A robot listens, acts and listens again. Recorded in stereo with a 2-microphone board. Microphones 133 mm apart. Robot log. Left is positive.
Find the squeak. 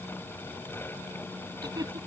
cmd idle
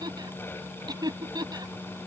cmd idle
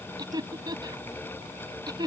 end: I can't make out a squeak to turn to.